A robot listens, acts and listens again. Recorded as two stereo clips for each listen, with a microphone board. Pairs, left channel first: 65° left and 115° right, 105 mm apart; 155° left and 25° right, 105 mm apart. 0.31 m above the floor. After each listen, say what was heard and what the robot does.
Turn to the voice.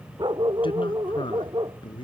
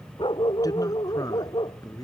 The man speaking: 105° left. Turn 105° left.
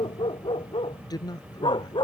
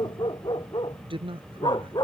The man speaking is now 15° left. Turn 15° left.
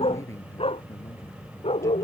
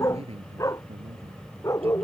Facing the man speaking.